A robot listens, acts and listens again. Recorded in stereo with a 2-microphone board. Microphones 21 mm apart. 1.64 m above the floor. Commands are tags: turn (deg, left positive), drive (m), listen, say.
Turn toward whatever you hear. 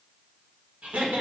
<turn deg="-90"/>
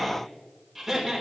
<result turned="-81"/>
<say>Found it: laughter, straight ahead, over 4 m away.</say>